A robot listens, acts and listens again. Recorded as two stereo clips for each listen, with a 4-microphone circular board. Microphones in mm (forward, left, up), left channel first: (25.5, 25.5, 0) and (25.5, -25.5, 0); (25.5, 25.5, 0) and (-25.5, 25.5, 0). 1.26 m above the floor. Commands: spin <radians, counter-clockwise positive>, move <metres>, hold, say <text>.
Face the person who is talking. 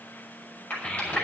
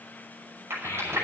spin 0.35
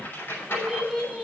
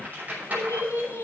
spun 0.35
say Found it: a child speaking, straight ahead, over 4 m away.